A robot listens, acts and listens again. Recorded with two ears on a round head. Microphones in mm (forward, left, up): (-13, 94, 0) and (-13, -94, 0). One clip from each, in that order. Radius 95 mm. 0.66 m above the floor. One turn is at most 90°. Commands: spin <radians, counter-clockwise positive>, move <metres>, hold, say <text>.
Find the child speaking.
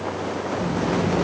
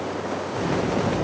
spin -1.22
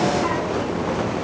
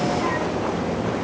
spin 0.35
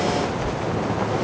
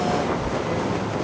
spin 0.44
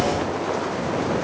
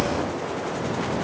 spin 0.61
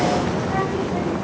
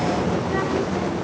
spin 0.61
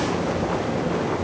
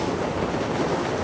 spin 0.35
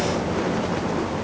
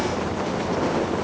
spin 0.17
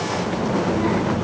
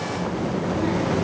say Found it: a child speaking, straight ahead, 1 to 2 m away.